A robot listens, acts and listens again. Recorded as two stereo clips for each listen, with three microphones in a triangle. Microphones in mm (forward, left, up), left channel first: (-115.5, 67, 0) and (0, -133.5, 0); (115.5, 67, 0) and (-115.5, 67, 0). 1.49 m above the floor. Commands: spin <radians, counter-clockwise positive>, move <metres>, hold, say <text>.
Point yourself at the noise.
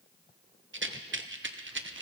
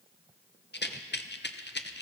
spin -0.61
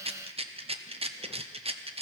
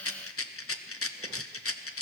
say Facing the rattle.